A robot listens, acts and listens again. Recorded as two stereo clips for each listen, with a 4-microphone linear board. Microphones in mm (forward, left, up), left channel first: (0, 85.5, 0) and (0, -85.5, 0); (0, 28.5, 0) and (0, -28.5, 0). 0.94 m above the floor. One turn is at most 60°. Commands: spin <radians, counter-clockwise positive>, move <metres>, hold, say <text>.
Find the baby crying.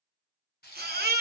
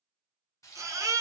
spin -1.05
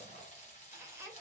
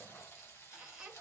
hold
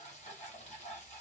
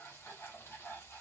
hold
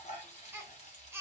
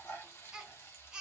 spin -0.26
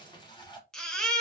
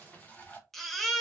say Facing the baby crying, under 1 m away.